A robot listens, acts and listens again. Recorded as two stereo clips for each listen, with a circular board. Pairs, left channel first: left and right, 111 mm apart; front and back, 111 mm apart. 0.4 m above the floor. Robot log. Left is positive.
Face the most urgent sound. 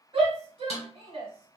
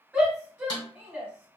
note: The shout: 110° right.
cmd yaw -110
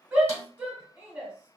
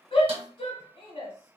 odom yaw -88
note: The shout is now 20° right.
cmd yaw -20
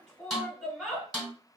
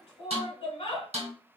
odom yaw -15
end: Found it: a shout, straight ahead, 1 to 2 m away.